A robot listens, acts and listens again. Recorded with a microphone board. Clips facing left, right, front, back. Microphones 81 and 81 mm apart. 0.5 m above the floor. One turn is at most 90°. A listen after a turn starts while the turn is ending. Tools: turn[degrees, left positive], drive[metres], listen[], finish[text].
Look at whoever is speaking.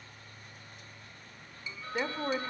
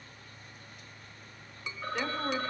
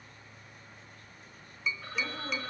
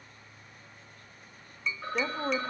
Thought: The woman speaking: 155° left.
Action: turn[90]
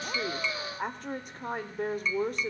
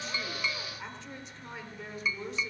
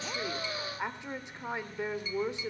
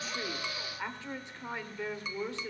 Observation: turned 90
Thought: The woman speaking is now 65° left.
Action: turn[65]
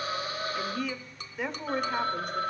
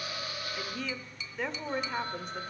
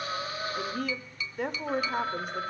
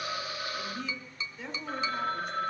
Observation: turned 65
Action: finish[Facing the woman speaking.]